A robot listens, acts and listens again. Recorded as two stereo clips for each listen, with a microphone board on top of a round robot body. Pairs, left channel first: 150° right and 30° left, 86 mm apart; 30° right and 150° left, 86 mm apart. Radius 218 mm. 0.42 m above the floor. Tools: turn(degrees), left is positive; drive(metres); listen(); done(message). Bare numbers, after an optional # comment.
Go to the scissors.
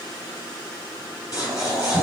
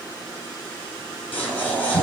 # The scissors: 100° right.
turn(-100)
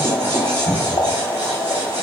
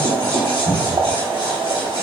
# The scissors is now 30° right.
turn(-30)
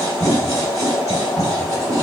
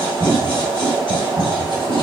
# The scissors is now 20° right.
turn(-20)
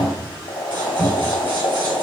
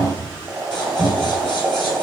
listen()
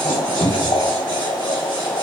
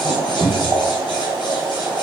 listen()
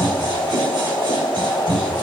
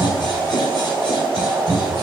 done("Facing where the scissors came from. I can't hear it now. I did not reach it.")